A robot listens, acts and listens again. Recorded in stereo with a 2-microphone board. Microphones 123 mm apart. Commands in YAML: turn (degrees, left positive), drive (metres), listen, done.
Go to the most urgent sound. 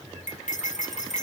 listen: true
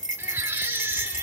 turn: -15
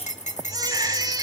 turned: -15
turn: -150
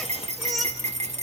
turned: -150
drive: 1.0
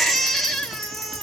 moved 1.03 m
drive: 1.0
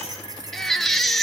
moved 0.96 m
drive: 1.0
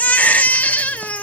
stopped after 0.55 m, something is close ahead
turn: 10
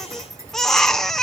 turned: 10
done: "Arrived at the baby crying, straight ahead."